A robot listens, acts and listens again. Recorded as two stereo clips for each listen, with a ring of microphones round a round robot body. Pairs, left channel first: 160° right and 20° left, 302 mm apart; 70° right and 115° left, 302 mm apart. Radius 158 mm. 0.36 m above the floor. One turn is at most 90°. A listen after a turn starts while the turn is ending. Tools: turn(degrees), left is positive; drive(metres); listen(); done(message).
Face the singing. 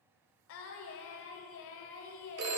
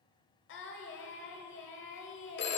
turn(degrees=-90)
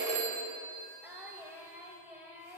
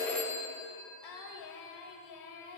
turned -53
turn(degrees=-60)
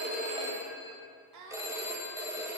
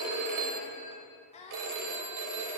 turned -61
done("Found it: singing, straight ahead.")